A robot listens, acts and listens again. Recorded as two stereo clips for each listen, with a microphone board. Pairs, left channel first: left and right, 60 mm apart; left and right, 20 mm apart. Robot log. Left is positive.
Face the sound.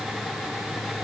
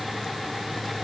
cmd idle
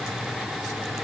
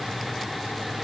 cmd idle
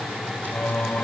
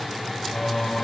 note: The singing: about 25° left or 155° left.
cmd yaw +25
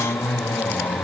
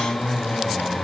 note: So it is at 125° left.
cmd yaw +125
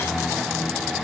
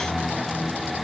end: Facing the singing.